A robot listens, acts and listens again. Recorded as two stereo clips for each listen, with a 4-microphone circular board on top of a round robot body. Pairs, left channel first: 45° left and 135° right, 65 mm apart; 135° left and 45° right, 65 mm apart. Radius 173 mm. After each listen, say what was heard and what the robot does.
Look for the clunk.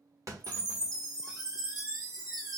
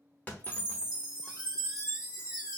The clunk: 160° right. Turn 160° right.
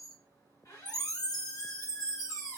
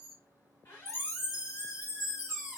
I heard a clunk from this way, but can't make it out now.